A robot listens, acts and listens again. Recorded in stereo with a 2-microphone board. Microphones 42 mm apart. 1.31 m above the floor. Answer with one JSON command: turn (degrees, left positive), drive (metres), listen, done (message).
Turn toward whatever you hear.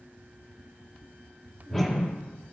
{"turn": 30}
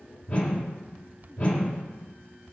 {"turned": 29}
{"turn": 140}
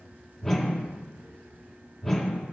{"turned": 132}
{"turn": 10}
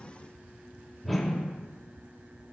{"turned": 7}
{"done": "Facing the whoosh."}